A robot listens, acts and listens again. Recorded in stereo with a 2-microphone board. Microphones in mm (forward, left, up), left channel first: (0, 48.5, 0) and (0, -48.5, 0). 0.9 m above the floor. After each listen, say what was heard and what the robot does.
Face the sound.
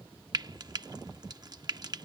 The frying: about 45° right or 135° right. Turn 45° right.
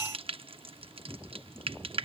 So it is at 85° right. Turn 85° right.
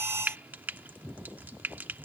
The frying is now 20° right. Turn 20° right.
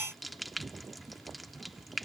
Found it: frying, straight ahead.